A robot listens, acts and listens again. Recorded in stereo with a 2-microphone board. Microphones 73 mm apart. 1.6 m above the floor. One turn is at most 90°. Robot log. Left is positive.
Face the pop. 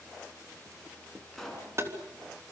cmd yaw +30
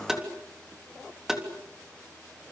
cmd idle
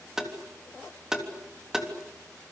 end: I heard a pop, but can't make it out now. It was about 25° right or 145° left.